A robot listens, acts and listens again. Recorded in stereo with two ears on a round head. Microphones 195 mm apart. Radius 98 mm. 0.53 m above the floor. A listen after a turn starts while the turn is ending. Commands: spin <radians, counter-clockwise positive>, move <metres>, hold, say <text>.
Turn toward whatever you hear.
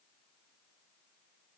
hold
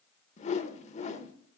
spin 0.61
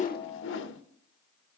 spin 1.83
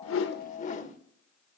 spin 0.70
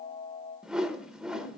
say Facing the whoosh.